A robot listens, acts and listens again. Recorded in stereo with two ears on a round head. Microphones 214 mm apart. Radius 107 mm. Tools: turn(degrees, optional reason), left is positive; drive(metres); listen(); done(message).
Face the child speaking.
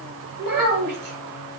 turn(degrees=-65, reason="The child speaking: about 65° right or 115° right.")
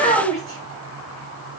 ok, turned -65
done("Facing the child speaking.")